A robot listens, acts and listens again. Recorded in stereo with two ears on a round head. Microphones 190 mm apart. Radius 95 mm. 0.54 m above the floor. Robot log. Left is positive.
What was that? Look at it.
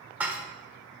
cmd yaw -30
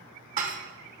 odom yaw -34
note: So it is at 135° right.
cmd yaw -135
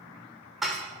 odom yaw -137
end: Found it: dishes clattering, straight ahead.